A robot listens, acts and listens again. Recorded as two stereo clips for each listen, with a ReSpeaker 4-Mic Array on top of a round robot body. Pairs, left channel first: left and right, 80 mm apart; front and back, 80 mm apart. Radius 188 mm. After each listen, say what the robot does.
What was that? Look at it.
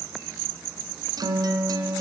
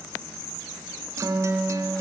Turn 125° right.
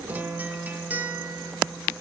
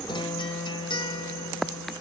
Turn 20° right.
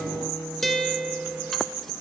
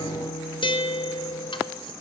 Facing the guitar.